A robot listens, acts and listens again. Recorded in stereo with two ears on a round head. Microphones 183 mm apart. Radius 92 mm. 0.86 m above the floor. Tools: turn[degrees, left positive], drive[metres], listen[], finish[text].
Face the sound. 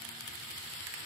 Action: listen[]
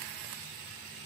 Action: listen[]
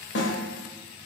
Thought: The snare drum: about 60° left or 120° left.
Action: turn[60]
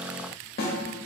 Thought: So it is at 55° left.
Action: turn[55]
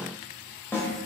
Thought: The snare drum is now 10° left.
Action: turn[10]
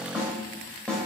Action: finish[Found it: a snare drum, straight ahead.]